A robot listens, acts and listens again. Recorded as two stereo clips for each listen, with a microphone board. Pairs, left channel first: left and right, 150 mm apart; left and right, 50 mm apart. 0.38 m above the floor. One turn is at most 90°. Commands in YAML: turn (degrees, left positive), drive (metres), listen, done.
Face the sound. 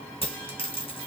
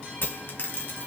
turn: 40
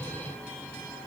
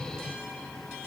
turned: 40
listen: true
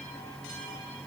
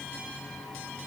done: "I heard a dropped coin, but can't make it out now. It was about straight ahead or 100° left."